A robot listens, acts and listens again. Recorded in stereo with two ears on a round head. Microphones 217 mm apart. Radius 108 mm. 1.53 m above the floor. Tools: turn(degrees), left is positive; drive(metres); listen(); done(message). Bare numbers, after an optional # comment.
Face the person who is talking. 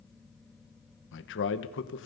# The man speaking: about 55° left or 125° left.
turn(55)
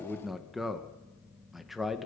done("Facing the man speaking.")